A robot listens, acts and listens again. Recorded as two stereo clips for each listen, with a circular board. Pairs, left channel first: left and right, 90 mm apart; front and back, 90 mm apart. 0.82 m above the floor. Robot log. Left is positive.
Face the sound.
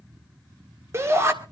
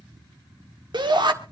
note: The shout: 150° right.
cmd yaw -150
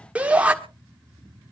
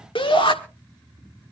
note: The shout is now 15° right.
cmd yaw -15
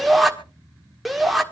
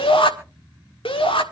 end: Facing the shout.